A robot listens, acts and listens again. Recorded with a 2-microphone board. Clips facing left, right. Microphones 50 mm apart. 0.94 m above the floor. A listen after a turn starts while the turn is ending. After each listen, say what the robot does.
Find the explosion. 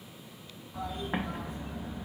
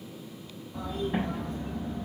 Turn 55° left.
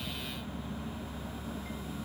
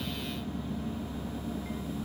Keep listening.
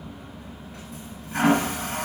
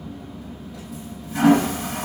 I heard an explosion, but can't make it out now. It was about straight ahead or 70° left.